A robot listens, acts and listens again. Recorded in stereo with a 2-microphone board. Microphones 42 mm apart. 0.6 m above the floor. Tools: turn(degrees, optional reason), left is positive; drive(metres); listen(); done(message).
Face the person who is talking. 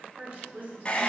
turn(degrees=-45, reason="The woman speaking: about 45° right or 135° right.")
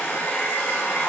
listen()
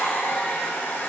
listen()
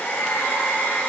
done("I heard a woman speaking, but can't make it out now. It was about straight ahead or 90° right.")